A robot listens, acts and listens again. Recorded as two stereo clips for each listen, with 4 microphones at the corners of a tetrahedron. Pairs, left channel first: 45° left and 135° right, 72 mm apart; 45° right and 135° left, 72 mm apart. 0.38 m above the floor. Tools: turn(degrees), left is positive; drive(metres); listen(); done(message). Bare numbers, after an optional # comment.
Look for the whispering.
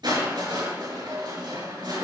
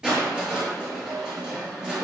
listen()
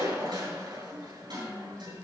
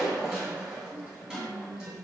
# The whispering: 110° left.
turn(110)
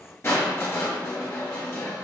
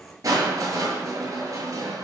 listen()
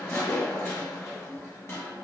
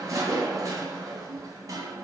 listen()
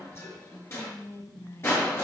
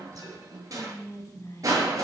done("Found it: whispering, straight ahead, 2 to 4 m away.")